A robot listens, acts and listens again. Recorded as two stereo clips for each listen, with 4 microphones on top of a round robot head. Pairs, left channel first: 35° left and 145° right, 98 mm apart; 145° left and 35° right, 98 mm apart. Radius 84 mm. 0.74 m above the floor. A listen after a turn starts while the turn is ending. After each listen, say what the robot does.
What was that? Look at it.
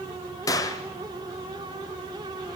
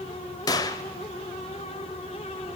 Turn 90° left.
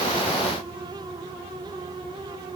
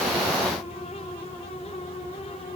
Facing where the gunshot came from. I can't hear it now.